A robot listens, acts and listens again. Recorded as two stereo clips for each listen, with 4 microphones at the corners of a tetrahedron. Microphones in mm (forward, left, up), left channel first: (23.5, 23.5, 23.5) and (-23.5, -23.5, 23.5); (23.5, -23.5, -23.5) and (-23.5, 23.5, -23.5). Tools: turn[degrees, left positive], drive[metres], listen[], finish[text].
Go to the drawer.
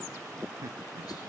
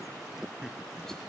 Action: listen[]
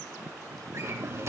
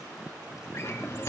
Thought: The drawer: 90° right.
Action: turn[-90]
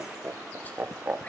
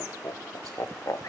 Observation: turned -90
Action: listen[]
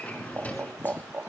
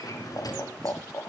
Thought: The drawer is now 20° right.
Action: turn[-20]
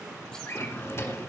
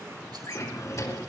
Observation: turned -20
Action: drive[1.0]
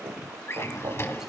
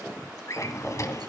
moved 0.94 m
Action: drive[1.0]
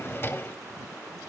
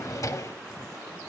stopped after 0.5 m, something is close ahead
Thought: The drawer is now 10° right.
Action: turn[-10]
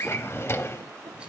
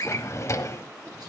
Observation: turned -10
Action: finish[I am next to the drawer.]